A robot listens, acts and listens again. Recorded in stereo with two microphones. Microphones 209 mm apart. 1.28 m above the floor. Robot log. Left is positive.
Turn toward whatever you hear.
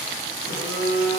cmd yaw +90
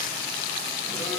cmd idle
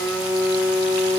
note: The phone buzzing is now 15° left.
cmd yaw +15
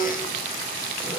end: Facing the phone buzzing, 2 to 4 m away.